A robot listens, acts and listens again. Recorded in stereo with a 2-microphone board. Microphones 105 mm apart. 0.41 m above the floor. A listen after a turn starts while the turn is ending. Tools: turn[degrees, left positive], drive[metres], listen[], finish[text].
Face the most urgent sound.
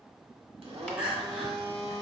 Action: turn[-30]
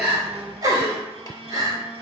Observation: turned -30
Thought: So it is at 140° right.
Action: turn[-140]
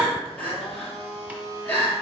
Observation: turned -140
Thought: The crying is now 20° left.
Action: turn[20]
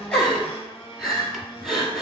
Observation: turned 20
Action: finish[Facing the crying, 1 to 2 m away.]